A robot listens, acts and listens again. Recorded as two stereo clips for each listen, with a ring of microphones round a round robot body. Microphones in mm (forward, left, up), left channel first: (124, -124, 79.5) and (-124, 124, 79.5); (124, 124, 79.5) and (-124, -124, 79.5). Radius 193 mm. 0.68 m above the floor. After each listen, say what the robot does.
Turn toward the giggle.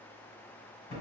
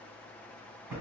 Keep listening.
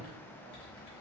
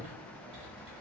Keep listening.
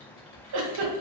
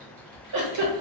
Turn 180° left.
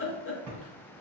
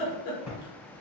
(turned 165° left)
Turn 15° left.
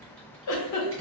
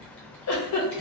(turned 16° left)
Facing the giggle, under 1 m away.